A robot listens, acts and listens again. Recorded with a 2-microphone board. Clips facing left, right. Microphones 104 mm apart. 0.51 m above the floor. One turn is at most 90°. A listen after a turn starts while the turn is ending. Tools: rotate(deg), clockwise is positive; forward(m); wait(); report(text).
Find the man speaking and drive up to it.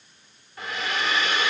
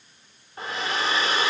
wait()
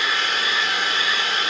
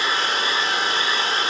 wait()
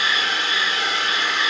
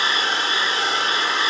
report("I can't make out a man speaking to turn to.")